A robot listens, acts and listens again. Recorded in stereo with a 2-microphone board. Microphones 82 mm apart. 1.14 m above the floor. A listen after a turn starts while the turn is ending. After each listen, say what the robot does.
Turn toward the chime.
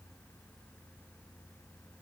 Keep listening.
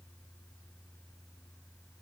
Keep listening.
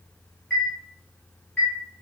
Turn 20° left.
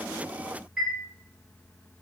Facing the chime.